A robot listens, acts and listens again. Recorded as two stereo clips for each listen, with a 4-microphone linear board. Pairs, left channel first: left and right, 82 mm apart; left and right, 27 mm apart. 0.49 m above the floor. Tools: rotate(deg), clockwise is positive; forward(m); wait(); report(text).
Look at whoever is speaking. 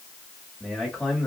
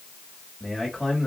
rotate(-30)
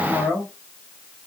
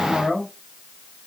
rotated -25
rotate(-150)
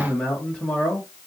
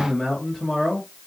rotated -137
rotate(-15)
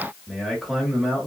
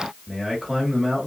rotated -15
report("Facing the man speaking, 1 to 2 m away.")